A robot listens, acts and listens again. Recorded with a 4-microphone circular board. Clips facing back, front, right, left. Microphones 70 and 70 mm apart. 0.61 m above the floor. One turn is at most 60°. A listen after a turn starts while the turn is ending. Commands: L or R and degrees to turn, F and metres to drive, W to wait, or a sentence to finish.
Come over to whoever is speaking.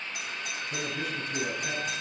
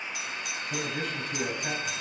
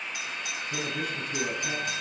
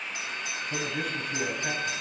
L55
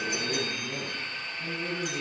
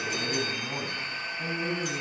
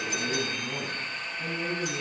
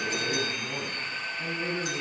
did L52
F1.0
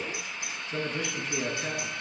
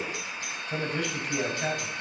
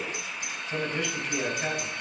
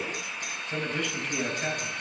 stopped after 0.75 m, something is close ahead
Something is in my way. I am facing the man speaking but have not reached it.